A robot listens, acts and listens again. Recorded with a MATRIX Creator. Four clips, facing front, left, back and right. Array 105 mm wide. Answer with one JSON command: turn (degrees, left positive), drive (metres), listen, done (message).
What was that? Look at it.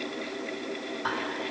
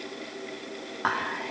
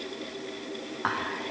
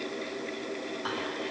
{"turn": 125}
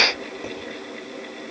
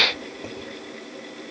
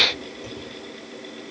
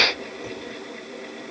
{"turn": 20}
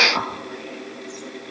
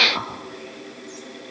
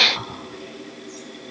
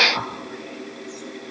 {"turn": 10}
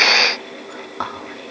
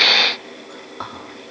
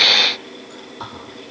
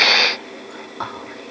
{"done": "Facing the whispering."}